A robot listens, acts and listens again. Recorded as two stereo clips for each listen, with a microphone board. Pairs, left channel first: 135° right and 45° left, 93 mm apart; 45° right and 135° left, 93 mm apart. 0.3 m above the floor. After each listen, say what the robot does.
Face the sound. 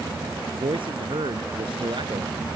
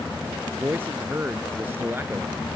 Turn 70° left.
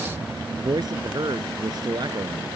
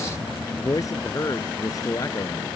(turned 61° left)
Found it: a man speaking, straight ahead.